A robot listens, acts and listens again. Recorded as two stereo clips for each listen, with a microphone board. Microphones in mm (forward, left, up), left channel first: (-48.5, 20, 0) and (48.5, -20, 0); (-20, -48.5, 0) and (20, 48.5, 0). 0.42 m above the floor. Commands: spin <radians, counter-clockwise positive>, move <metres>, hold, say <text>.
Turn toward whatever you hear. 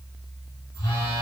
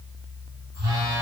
spin 1.92
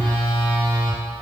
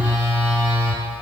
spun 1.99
say Facing the phone buzzing, under 1 m away.